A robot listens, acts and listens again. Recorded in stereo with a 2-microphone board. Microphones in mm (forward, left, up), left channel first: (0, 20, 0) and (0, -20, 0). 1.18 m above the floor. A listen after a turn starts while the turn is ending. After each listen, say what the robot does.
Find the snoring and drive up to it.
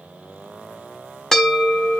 Keep listening.
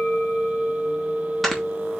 Turn 30° left.
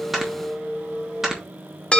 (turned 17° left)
Turn 10° right.
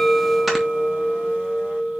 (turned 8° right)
Keep listening.
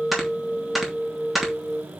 Drive 1.0 m forward.
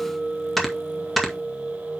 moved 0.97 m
Drive 1.0 m forward.
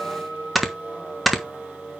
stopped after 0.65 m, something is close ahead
Arrived at the snoring, straight ahead.